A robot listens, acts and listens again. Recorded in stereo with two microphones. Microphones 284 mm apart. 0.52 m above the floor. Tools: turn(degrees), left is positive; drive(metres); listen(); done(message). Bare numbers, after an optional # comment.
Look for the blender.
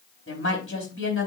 listen()
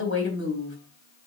listen()
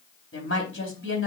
done("I can't make out a blender, only a woman speaking.")